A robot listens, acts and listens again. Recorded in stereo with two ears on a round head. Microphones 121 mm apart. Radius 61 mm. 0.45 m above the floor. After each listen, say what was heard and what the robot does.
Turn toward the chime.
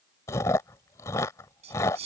Keep listening.
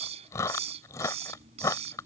Keep listening.
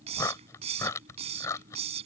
I can't make out a chime to turn to.